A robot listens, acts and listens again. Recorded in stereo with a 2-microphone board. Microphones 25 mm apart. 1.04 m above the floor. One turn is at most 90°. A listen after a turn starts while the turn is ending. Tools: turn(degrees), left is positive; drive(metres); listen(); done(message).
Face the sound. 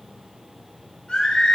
turn(degrees=40)
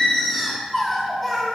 done("Facing the singing, 2 to 4 m away.")